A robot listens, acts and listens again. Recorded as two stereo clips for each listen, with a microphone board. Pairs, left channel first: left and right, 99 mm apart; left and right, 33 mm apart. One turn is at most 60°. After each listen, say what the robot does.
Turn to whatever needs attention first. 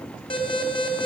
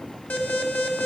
Turn 60° left.
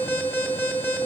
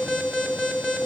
Turn 20° left.
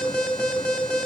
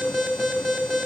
Turn 10° left.
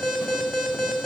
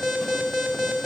Facing the alarm.